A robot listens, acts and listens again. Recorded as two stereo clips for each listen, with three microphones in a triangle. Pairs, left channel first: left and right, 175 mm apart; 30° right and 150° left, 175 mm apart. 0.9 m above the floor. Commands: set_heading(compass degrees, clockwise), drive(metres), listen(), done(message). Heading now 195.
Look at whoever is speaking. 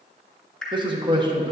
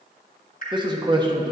set_heading(345)
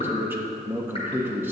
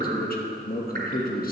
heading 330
set_heading(345)
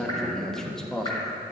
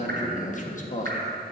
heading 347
done("Facing the man speaking.")